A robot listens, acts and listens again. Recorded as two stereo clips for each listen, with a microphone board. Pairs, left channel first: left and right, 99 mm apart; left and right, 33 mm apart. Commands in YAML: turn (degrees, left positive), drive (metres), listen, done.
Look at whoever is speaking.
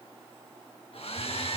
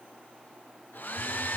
listen: true
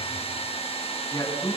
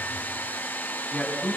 turn: 35
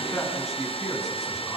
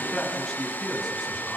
done: "Facing the man speaking."